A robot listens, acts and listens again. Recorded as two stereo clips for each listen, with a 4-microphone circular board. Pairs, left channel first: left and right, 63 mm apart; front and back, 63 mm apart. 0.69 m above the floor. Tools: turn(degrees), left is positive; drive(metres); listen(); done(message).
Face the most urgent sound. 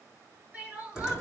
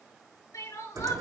turn(degrees=-25)
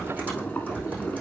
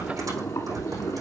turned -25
listen()
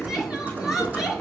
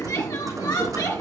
listen()
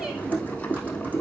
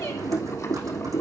done("I heard crying from this way, but can't make it out now.")